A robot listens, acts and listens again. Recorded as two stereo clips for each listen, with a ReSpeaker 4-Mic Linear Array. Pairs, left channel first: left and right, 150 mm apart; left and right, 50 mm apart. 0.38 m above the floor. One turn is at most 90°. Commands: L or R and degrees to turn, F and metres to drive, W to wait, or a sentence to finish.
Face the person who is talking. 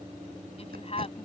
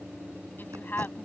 L45
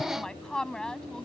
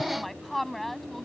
Facing the woman speaking.